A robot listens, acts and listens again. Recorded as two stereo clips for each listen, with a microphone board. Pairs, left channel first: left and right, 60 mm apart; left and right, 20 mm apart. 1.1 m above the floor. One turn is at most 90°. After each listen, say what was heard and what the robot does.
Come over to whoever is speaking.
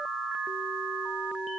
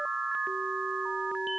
Keep listening.
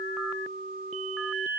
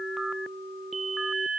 Keep listening.
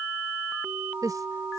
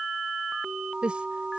The woman speaking: about 75° right or 105° right. Turn 75° right.
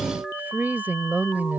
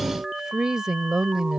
So it is at 30° right. Turn 30° right.
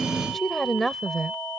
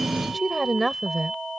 Drive 1.0 m forward.
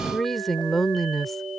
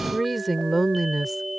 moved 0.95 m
Drive 1.0 m forward.
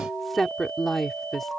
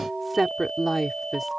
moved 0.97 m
Drive 1.0 m forward.
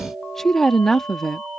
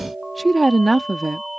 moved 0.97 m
Drive 1.0 m forward.
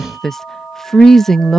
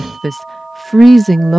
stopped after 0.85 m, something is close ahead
Arrived at the woman speaking, straight ahead.